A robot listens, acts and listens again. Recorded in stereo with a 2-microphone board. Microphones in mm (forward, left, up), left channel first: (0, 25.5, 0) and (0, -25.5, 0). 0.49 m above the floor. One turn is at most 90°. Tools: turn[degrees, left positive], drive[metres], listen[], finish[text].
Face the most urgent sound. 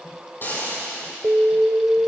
Thought: The alarm: about 60° right or 120° right.
Action: turn[-60]
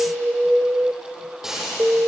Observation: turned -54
Thought: So it is at 45° right.
Action: turn[-45]
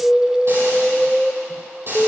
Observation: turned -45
Action: finish[Found it: an alarm, straight ahead, 1 to 2 m away.]